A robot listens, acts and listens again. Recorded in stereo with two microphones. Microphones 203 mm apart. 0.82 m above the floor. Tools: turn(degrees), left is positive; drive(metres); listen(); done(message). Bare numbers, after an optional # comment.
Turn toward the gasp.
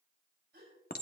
# The gasp: about 55° right or 125° right.
turn(-55)
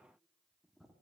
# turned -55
listen()
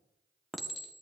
done("I heard a gasp, but can't make it out now. It was about straight ahead or 70° right.")